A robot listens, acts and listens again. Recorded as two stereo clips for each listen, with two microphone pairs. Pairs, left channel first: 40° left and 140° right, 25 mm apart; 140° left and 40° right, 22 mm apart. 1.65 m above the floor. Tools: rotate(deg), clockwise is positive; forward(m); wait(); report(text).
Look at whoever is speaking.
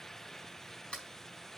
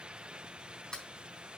wait()
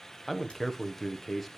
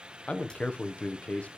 rotate(-120)
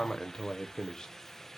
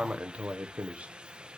rotate(30)
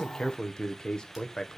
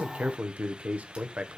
rotate(25)
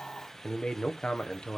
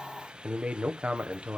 rotate(15)
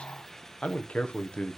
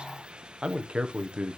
report("Found it: a man speaking, straight ahead, 1 to 2 m away.")